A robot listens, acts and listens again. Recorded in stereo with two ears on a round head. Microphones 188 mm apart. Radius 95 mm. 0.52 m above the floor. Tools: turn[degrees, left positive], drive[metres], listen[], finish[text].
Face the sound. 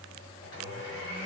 Thought: The blender: about 55° left or 125° left.
Action: turn[55]
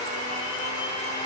Thought: So it is at 20° left.
Action: turn[20]
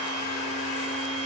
Action: finish[Facing the blender.]